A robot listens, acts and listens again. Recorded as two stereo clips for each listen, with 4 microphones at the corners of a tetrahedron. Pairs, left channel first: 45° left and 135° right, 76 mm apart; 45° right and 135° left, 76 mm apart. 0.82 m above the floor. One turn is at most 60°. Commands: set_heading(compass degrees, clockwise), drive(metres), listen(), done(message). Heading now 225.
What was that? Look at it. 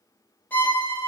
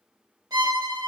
set_heading(165)
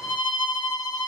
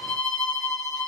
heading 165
set_heading(120)
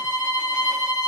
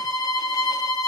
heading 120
set_heading(130)
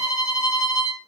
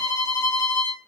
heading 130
done("Facing the violin.")